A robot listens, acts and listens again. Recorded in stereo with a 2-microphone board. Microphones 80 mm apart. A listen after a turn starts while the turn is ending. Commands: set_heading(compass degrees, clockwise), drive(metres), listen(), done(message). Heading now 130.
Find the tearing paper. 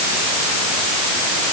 listen()
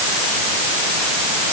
listen()
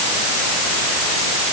done("I can't make out tearing paper.")